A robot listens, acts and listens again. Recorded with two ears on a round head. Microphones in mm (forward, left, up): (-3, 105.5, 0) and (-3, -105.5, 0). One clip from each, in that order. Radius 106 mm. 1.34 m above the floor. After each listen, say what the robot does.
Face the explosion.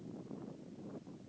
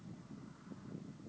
Keep listening.
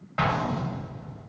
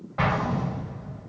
Turn 65° left.
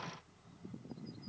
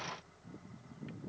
Keep listening.
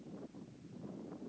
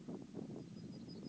I heard an explosion, but can't make it out now. It was about straight ahead or 50° left.